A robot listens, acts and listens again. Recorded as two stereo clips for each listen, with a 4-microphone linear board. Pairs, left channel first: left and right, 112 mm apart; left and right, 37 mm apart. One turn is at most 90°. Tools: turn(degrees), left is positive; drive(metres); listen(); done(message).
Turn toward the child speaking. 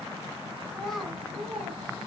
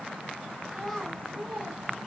turn(degrees=-30)
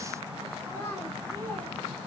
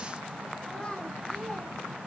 turn(degrees=15)
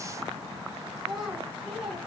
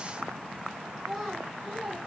done("Facing the child speaking, over 4 m away.")